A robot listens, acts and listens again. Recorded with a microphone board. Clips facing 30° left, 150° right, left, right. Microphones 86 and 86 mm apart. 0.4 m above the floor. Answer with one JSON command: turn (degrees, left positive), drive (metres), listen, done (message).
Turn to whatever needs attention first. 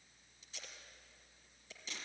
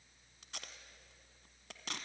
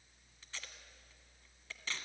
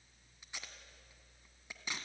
{"listen": true}
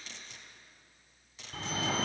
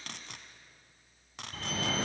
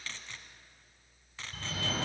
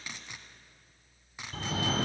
{"turn": -55}
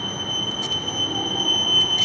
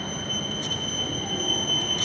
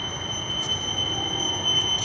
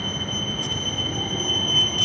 {"done": "Found it: a fire alarm, straight ahead."}